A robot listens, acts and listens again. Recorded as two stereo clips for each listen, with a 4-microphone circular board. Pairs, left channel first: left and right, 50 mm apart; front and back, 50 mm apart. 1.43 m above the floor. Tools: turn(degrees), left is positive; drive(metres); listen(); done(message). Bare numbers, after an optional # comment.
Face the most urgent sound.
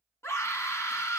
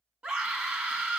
# The scream: 115° left.
turn(115)
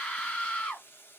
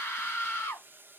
# The scream is now 35° left.
turn(35)
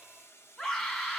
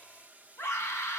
# The scream is now 20° left.
turn(20)
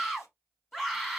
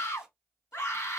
done("Found it: a scream, straight ahead.")